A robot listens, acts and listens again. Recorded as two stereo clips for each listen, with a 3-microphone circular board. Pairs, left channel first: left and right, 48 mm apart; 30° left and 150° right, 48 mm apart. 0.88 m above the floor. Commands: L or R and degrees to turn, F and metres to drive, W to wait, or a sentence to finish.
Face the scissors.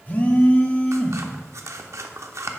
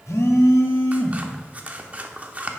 R90
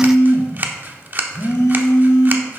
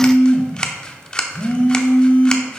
R40
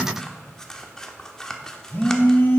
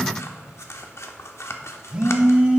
L15
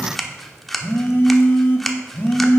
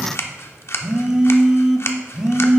Facing the scissors, under 1 m away.